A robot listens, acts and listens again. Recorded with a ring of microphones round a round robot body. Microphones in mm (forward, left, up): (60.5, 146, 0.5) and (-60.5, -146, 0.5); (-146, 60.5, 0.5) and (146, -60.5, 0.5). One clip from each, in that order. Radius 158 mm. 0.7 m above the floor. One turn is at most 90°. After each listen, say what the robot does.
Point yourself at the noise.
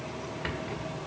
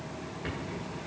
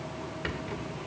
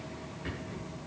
Turn 90° left.
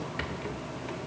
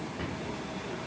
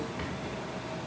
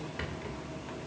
Turn 50° left.
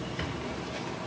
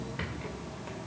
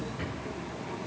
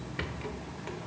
Turn 15° right.
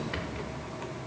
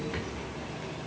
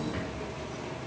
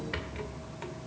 Facing the rattle.